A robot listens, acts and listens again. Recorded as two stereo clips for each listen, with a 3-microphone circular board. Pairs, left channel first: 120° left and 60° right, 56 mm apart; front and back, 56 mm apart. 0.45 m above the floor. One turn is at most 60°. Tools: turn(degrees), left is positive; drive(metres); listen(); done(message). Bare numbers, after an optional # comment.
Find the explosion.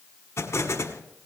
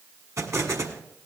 # The explosion: 155° left.
turn(60)
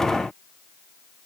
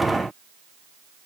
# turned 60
# Nothing new. It was at 95° left.
turn(60)
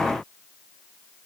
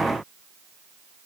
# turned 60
# Nothing new. It was at 35° left.
turn(35)
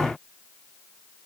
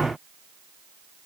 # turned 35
done("I heard an explosion from this way, but can't make it out now.")